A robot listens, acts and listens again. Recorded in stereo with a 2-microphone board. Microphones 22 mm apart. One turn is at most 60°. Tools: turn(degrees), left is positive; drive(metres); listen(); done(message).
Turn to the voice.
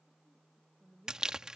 turn(degrees=-30)
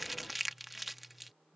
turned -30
listen()
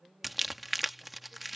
turn(degrees=-60)
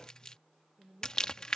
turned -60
turn(degrees=-60)
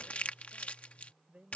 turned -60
turn(degrees=-55)
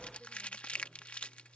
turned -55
listen()
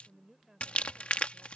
turn(degrees=-20)
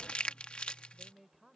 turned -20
done("Facing the woman speaking.")